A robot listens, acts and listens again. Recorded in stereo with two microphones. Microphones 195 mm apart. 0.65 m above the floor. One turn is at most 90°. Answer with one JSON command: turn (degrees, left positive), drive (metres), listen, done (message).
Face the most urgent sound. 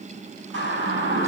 {"turn": -90}
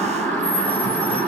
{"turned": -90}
{"done": "Facing the siren."}